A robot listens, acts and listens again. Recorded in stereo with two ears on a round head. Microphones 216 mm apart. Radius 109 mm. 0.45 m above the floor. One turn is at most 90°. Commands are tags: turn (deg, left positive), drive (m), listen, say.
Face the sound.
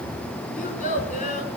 <turn deg="30"/>
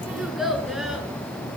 <say>Found it: a child speaking, straight ahead.</say>